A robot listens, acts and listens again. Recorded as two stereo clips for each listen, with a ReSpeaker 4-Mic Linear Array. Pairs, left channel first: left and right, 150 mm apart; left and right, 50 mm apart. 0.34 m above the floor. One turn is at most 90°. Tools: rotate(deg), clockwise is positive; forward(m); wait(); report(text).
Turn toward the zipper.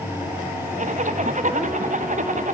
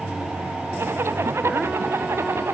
rotate(55)
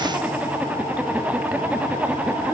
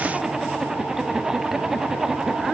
rotate(10)
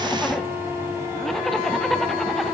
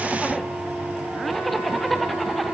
report("Found it: a zipper, straight ahead.")